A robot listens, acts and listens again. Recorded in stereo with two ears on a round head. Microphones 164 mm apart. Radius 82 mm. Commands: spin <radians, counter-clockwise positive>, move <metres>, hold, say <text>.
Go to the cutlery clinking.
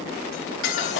spin 1.57
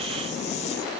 hold
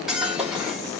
move 1.0
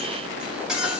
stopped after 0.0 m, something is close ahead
say Blocked. The cutlery clinking is further on, straight ahead.